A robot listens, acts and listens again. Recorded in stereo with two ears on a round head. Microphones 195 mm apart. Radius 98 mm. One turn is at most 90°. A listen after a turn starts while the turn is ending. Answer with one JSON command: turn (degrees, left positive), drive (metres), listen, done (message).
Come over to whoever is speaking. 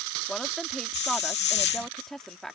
{"turn": 30}
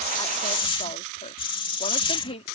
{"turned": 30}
{"turn": 90}
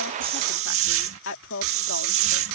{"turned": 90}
{"turn": 60}
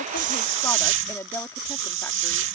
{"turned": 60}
{"turn": 10}
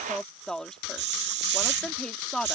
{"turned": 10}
{"drive": 1.0}
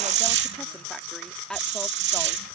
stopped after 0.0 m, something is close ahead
{"done": "Blocked. The woman speaking is further on, straight ahead."}